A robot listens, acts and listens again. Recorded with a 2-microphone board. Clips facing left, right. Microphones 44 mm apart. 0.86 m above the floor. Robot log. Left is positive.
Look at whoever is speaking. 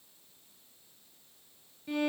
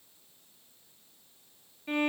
cmd idle
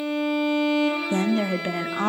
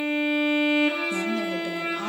note: The woman speaking: about 45° left or 135° left.
cmd yaw +45
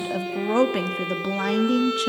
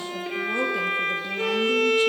note: So it is at 90° left.
cmd yaw +90
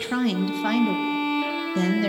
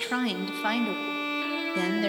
end: Found it: a woman speaking, straight ahead.